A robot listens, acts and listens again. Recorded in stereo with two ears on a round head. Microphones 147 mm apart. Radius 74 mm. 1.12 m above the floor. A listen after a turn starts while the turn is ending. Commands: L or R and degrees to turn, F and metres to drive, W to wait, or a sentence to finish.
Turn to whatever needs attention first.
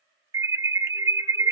R20
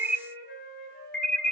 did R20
Found it: an alarm, straight ahead, 1 to 2 m away.